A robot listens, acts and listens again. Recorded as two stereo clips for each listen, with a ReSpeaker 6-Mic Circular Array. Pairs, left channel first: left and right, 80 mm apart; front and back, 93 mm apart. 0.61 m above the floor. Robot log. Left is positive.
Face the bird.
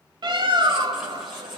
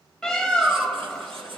note: The bird: 85° right.
cmd yaw -85
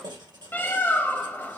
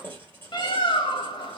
note: The bird is now 25° left.
cmd yaw +25
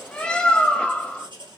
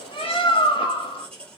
note: The bird is now 15° left.
cmd yaw +15
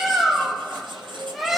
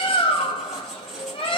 end: Found it: a bird, straight ahead, under 1 m away.